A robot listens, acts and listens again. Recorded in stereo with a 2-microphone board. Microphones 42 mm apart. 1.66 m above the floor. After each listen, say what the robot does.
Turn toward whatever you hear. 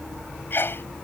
Turn 60° left.
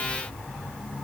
Keep listening.
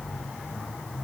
I heard a sneeze, but can't make it out now. It was about straight ahead or 60° left.